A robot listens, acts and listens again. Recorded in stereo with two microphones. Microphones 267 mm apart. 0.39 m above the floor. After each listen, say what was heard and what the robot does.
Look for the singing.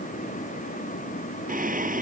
The singing: about 30° right or 150° right. Turn 30° right.
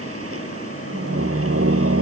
So it is at 125° right. Turn 125° right.
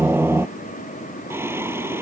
The singing is now 10° right. Turn 10° right.
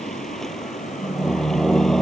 Found it: singing, straight ahead.